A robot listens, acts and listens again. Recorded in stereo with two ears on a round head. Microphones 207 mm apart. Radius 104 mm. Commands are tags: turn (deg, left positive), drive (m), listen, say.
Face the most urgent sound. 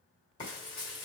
<listen/>
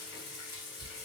<listen/>
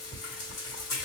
<say>I can't make out anything urgent to turn to.</say>